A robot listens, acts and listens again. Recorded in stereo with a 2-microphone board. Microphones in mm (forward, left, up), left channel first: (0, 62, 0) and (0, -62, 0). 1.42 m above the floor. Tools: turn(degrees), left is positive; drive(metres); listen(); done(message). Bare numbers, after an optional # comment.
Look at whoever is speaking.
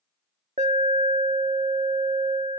listen()
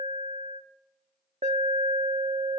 listen()
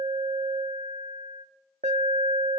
done("I can't make out anyone speaking to turn to.")